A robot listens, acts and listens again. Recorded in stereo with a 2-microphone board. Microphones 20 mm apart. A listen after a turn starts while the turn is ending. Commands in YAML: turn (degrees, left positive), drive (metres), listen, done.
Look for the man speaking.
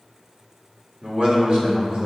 turn: -55
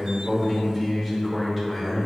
turn: -25
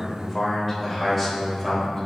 turn: -10
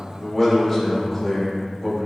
done: "Facing the man speaking."